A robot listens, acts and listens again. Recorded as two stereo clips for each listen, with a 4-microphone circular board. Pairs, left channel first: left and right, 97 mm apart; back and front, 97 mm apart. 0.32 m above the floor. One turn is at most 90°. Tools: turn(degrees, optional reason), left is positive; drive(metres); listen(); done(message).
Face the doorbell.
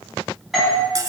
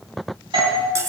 done("Facing the doorbell, 2 to 4 m away.")